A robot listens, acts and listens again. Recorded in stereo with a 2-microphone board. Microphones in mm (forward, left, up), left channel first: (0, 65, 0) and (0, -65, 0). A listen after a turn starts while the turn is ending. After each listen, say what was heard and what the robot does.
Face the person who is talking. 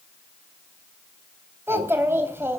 The child speaking: about 20° right or 160° right. Turn 20° right.
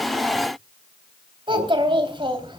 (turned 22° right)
So it is at 140° right. Turn 140° right.
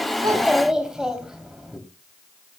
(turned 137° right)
Facing the child speaking.